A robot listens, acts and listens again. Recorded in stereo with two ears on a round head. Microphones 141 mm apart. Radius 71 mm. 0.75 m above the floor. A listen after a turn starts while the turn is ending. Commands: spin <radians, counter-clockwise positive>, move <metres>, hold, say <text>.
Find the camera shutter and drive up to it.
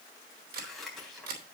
spin -1.22
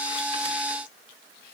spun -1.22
hold
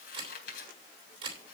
spin -0.61
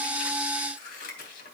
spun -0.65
hold
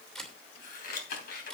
move 1.0
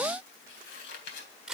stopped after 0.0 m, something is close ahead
say Something is in my way. I am facing the camera shutter but have not reached it.